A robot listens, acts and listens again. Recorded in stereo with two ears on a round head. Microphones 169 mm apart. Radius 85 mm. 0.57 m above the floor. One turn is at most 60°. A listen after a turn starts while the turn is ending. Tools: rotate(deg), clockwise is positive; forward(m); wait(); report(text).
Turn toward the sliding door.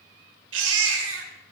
wait()
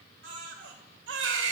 wait()
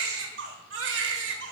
report("I can't make out a sliding door, only a baby crying.")